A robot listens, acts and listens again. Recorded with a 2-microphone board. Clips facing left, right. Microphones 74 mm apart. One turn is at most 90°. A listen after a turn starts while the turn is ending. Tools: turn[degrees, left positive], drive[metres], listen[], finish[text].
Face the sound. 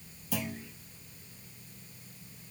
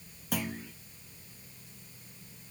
Thought: The clunk: about 65° right or 115° right.
Action: turn[-65]
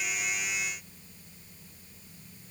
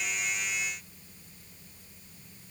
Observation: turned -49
Action: listen[]
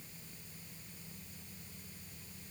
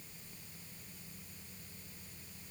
Action: finish[I heard a clunk, but can't make it out now. It was about 15° right or 70° right.]